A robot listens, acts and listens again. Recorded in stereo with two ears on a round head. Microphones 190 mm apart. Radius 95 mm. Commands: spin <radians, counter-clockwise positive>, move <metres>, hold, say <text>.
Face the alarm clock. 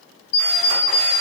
spin 1.05
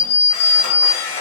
spin 0.96
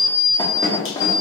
spin 0.35
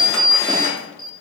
say Facing the alarm clock.